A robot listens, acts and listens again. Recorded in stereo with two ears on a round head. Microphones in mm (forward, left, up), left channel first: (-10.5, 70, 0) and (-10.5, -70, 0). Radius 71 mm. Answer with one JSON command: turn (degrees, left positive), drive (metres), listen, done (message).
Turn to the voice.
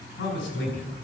{"turn": 60}
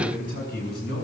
{"turn": 70}
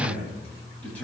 {"turn": 10}
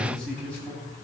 {"turn": 10}
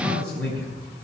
{"turn": 10}
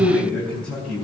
{"done": "Found it: a man speaking, straight ahead."}